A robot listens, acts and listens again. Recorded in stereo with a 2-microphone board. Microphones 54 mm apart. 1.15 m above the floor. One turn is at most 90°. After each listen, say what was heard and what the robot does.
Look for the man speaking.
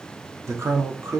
The man speaking: about 70° right or 110° right. Turn 70° right.
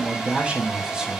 So it is at 20° right. Turn 20° right.
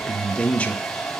The man speaking is now 25° left. Turn 25° left.
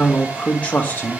The man speaking is now 30° left. Turn 30° left.
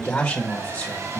The man speaking is now 15° left. Turn 15° left.
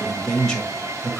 Found it: a man speaking, straight ahead, 1 to 2 m away.